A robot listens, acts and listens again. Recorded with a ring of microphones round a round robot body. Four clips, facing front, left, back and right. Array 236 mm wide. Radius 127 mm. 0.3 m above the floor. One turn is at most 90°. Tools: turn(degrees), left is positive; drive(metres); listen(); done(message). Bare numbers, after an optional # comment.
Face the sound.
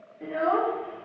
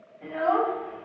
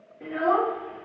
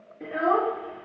# The child speaking: 100° right.
turn(-90)
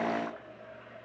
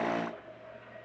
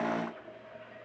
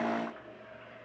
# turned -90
# Nothing new. It was at 10° right.
turn(-10)
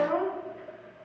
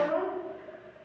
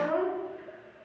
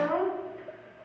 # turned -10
# The child speaking is now 40° right.
turn(-40)
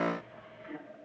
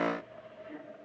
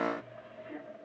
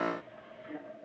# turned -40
listen()
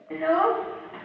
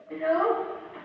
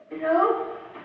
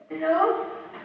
# The child speaking is now 20° right.
turn(-20)
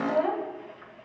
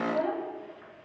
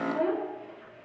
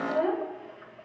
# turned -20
done("Found it: a child speaking, straight ahead, 2 to 4 m away.")